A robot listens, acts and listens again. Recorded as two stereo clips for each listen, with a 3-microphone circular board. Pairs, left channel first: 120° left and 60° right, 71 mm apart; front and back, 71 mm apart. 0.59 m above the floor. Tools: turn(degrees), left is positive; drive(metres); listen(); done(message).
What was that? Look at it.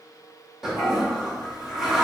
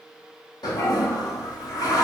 turn(degrees=25)
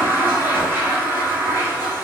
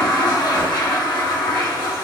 done("Found it: a toilet flushing, straight ahead, under 1 m away.")